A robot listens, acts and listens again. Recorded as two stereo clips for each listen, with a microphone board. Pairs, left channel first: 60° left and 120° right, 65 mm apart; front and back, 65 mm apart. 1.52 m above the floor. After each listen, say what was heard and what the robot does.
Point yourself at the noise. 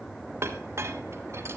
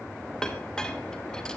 The clink: 80° right. Turn 80° right.
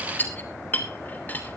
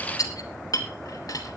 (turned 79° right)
Facing the clink.